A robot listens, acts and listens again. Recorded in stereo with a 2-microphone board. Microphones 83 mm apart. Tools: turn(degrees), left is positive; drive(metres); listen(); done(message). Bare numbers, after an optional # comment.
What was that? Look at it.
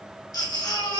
# The baby crying: about 55° left or 125° left.
turn(55)
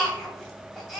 done("Facing the baby crying.")